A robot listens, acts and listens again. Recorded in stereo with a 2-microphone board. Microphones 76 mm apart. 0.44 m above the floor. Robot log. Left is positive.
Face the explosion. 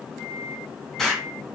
cmd yaw +30
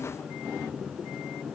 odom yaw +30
cmd idle
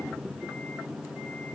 end: I heard an explosion, but can't make it out now. It was about 25° right or 145° left.